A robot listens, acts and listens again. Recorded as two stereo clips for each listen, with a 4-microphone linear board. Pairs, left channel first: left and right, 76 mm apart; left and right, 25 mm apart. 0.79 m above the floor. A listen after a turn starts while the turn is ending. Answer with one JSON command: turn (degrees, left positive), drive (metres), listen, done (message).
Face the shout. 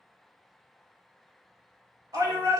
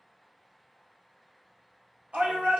{"turn": -60}
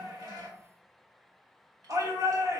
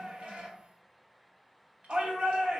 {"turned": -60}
{"turn": -55}
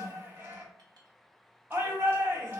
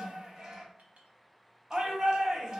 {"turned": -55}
{"turn": -30}
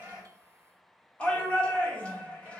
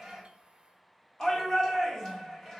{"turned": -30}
{"turn": 15}
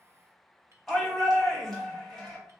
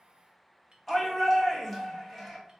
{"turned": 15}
{"done": "Found it: a shout, straight ahead, 1 to 2 m away."}